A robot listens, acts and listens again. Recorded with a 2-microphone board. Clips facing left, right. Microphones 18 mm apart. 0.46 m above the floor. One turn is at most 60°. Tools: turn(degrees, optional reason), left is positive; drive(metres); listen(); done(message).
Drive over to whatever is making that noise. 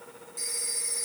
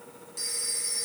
turn(degrees=-40, reason="The phone ringing: about 40° right or 140° right.")
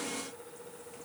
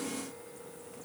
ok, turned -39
listen()
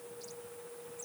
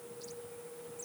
listen()
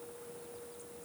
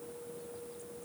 done("I heard a phone ringing, but can't make it out now. It was about straight ahead or 105° right. I did not reach it.")